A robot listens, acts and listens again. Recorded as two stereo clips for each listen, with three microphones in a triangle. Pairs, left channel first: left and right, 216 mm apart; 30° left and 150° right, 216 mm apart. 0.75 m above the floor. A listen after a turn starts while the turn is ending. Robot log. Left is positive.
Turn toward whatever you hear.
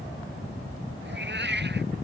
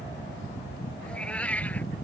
note: The cat meowing: 55° right.
cmd yaw -55
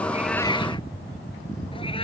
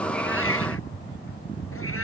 cmd idle
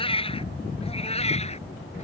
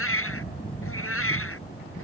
note: The cat meowing is now 30° left.
cmd yaw +30
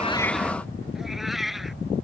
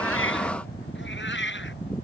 end: Found it: a cat meowing, straight ahead.